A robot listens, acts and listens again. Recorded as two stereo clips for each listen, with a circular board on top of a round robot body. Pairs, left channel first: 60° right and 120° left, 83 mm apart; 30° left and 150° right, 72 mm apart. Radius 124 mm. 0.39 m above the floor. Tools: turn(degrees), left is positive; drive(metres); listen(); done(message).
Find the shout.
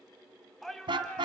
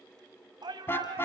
turn(degrees=-145)
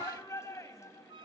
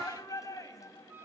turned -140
done("Found it: a shout, straight ahead.")